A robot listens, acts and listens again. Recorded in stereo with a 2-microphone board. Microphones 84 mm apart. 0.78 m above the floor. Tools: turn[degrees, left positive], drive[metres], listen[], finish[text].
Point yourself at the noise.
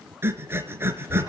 Thought: The breathing: about 30° right or 150° right.
Action: turn[-30]
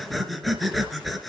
Action: finish[Facing the breathing.]